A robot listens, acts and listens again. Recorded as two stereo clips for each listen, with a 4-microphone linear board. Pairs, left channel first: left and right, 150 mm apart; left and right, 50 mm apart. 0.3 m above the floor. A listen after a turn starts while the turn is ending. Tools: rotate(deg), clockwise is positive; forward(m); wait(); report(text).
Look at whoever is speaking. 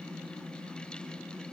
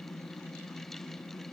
wait()
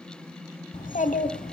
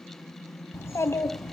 rotate(-60)
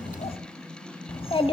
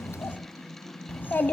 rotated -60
rotate(-40)
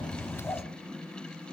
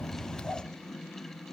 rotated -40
rotate(-20)
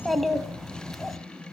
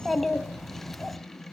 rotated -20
report("Facing the child speaking.")